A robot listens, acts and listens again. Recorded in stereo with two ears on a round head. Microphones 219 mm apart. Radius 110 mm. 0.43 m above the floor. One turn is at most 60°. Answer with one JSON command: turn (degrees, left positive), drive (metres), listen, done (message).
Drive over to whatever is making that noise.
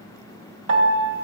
{"turn": -55}
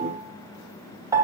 {"turn": -15}
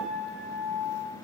{"drive": 1.0}
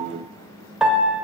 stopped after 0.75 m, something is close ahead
{"done": "Arrived at the piano, straight ahead."}